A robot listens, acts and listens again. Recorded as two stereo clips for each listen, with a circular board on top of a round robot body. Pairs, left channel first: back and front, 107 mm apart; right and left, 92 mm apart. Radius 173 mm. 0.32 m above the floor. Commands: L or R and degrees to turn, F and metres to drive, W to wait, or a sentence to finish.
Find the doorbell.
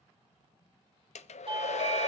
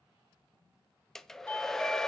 R15
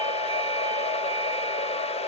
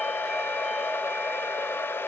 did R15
W
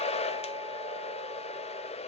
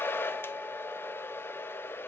W
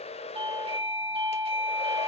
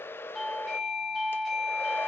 Found it: a doorbell, straight ahead.